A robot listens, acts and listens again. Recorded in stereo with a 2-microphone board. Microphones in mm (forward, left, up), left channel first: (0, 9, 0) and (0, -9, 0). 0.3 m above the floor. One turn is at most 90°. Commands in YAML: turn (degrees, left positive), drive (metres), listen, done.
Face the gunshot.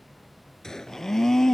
turn: 30
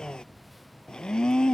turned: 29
listen: true
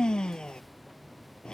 done: "I heard a gunshot, but can't make it out now. It was about straight ahead or 120° left."